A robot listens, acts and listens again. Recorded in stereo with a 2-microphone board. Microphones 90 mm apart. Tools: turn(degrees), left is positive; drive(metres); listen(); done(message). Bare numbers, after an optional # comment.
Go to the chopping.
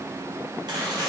# The chopping: about 55° right or 125° right.
turn(-55)
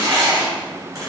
# So it is at 50° right.
turn(-50)
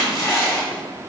drive(1.0)
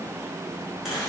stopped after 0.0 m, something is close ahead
listen()
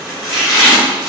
done("Something is in my way. I am facing the chopping but have not reached it.")